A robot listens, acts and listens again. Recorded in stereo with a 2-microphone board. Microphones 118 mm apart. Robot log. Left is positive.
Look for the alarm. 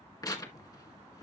cmd idle
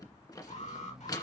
note: The alarm: about 75° left or 105° left.
cmd yaw +75
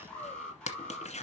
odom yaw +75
note: So it is at 10° left.
cmd yaw +10
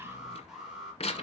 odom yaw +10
end: Facing the alarm, over 4 m away.